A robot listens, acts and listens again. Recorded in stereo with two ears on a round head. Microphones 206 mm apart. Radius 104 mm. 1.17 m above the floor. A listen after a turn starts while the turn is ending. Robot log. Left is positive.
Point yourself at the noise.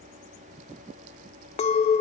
note: The clink: about 30° left or 150° left.
cmd yaw +30
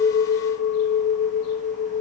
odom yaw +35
note: So it is at 115° left.
cmd yaw +115
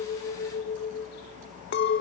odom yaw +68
note: The clink is now 45° left.
cmd yaw +45
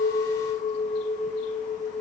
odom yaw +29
note: The clink is now 20° left.
cmd yaw +20
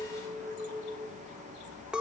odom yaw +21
end: Facing the clink.